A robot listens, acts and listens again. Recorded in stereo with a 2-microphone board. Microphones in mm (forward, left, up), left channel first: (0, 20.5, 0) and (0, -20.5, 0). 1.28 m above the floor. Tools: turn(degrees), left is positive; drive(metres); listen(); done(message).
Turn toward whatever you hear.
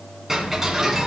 turn(degrees=-30)
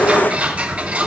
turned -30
turn(degrees=-140)
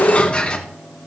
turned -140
turn(degrees=30)
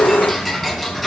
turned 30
done("Facing the ticking, 2 to 4 m away.")